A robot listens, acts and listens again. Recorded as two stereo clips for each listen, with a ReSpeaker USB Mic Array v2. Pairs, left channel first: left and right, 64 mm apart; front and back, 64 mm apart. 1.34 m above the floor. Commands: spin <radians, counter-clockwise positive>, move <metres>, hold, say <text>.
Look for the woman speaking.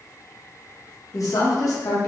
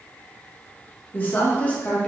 spin 1.31
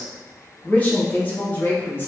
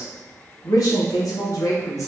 spin 0.61
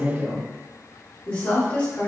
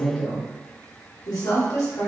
spin 0.35
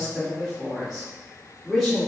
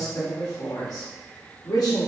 say Facing the woman speaking, 2 to 4 m away.